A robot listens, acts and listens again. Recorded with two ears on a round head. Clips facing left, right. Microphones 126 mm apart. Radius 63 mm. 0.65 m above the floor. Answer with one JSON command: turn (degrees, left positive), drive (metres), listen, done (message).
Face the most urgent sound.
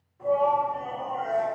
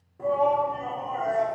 {"turn": -60}
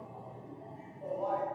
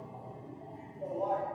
{"turn": -25}
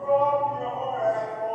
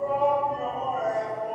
{"done": "Facing the shout."}